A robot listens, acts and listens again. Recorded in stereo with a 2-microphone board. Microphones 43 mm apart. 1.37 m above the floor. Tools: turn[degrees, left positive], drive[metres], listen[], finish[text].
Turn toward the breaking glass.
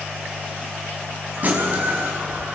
Thought: The breaking glass: about 40° right or 140° right.
Action: turn[-40]
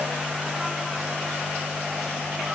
Action: listen[]
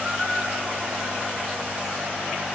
Action: finish[I heard breaking glass, but can't make it out now. It was about straight ahead or 100° right.]